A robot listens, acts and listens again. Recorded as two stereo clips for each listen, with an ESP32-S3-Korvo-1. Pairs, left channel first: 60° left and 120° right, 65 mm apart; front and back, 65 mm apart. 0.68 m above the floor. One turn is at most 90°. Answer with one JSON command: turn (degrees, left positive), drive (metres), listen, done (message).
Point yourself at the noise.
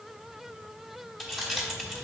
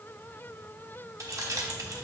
{"turn": 90}
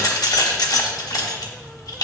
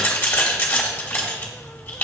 {"turn": 55}
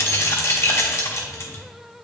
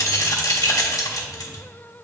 {"turn": 15}
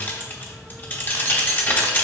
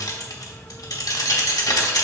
{"done": "Found it: keys jangling, straight ahead."}